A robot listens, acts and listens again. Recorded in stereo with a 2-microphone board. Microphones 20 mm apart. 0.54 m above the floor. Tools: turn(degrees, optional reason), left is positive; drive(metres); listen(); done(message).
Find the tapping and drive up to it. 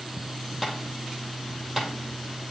turn(degrees=-30)
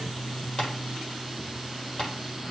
listen()
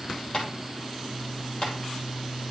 turn(degrees=30, reason="So it is at 30° left.")
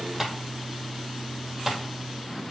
turn(degrees=-15, reason="The tapping is now 15° right.")
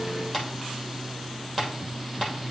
drive(metres=1.0)
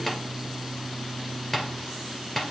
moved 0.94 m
drive(metres=1.0)
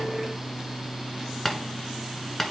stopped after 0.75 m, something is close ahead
turn(degrees=10, reason="The tapping is now 10° left.")
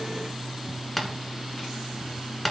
done("Arrived at the tapping, straight ahead.")